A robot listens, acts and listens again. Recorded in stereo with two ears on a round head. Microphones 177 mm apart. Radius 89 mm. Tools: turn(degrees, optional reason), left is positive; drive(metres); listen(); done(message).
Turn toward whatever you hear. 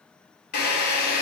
turn(degrees=55, reason="The drill: about 55° left or 125° left.")
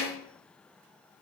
listen()
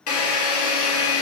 turn(degrees=75, reason="So it is at 75° left.")
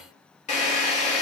turn(degrees=35, reason="The drill is now 35° left.")
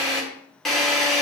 done("Found it: a drill, straight ahead, 2 to 4 m away.")